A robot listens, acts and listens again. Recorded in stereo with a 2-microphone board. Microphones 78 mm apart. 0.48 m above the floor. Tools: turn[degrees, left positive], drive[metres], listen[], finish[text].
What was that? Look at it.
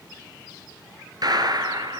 Thought: The gunshot: about 55° right or 125° right.
Action: turn[-55]
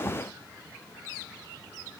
Action: listen[]
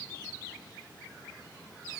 Action: finish[I heard a gunshot, but can't make it out now. It was about straight ahead or 70° right.]